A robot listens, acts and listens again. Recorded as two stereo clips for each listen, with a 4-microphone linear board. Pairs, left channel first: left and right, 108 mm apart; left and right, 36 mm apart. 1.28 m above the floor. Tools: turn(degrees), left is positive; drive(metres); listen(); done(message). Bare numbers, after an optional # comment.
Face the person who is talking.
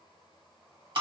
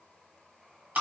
listen()
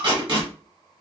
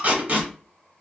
listen()
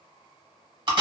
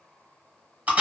done("I can't make out anyone speaking to turn to.")